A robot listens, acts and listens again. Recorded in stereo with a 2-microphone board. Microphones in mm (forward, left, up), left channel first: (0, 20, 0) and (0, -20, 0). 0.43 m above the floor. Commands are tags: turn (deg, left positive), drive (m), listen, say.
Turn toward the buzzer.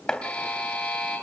<turn deg="30"/>
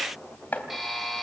<say>Facing the buzzer, over 4 m away.</say>